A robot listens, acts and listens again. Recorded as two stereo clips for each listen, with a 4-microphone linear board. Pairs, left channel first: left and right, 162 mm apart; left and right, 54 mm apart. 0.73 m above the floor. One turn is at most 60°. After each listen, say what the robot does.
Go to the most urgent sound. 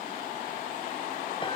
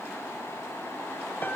Keep listening.
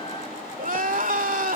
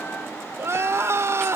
Turn 60° right.
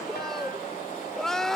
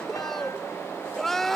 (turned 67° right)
Drive 1.0 m forward.
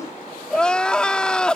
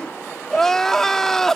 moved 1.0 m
Drive 1.0 m forward.
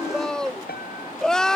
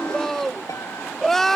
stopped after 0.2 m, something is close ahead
I am next to the crying.